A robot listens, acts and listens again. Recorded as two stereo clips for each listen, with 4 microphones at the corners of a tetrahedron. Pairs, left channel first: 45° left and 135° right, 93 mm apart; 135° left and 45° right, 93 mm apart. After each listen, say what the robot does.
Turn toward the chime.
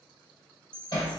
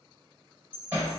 Turn 120° left.
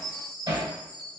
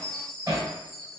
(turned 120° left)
Facing the chime, 1 to 2 m away.